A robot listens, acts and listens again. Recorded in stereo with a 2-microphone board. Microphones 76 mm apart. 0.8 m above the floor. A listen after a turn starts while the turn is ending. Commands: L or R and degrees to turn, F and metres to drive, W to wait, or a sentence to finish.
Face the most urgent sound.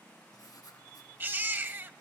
R30
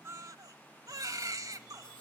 R120
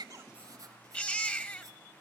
L20
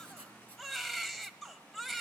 Facing the baby crying, 1 to 2 m away.